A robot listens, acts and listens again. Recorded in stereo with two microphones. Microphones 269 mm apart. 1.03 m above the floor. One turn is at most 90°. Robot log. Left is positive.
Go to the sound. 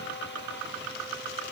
cmd idle
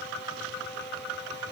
cmd idle
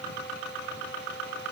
end: I can't make out anything to turn to.